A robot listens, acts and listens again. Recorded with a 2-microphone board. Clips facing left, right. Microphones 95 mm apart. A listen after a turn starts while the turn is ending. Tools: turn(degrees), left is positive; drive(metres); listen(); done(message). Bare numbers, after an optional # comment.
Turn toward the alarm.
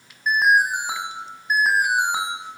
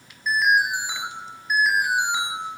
# The alarm: about 45° left or 135° left.
turn(45)
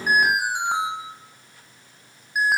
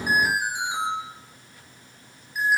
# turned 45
# So it is at 85° left.
turn(85)
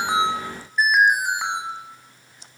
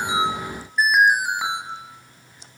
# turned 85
done("Facing the alarm.")